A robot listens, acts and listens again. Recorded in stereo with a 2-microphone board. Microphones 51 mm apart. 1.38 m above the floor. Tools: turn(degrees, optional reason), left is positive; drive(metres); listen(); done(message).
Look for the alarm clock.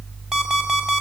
turn(degrees=-30)
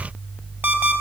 turn(degrees=-140, reason="So it is at 140° right.")
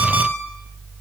listen()
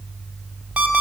turn(degrees=-20, reason="The alarm clock is now 20° right.")
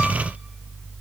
listen()
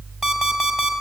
done("Facing the alarm clock.")